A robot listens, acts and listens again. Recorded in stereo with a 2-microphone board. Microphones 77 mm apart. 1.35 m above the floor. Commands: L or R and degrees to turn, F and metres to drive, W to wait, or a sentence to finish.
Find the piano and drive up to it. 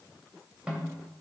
W
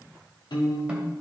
L75
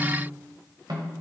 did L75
W
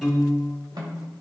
F1.0
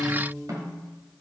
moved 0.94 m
F1.0
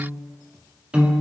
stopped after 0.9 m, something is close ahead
R15
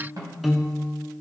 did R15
Arrived at the piano, straight ahead.